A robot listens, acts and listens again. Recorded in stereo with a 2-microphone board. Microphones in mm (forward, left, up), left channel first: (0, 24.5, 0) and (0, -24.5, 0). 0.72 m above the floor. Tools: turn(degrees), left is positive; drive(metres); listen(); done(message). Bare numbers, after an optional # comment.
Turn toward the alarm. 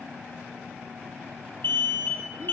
# The alarm: about 55° left or 125° left.
turn(55)
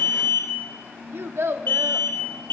# So it is at 65° left.
turn(65)
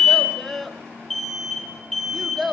done("Facing the alarm, 2 to 4 m away.")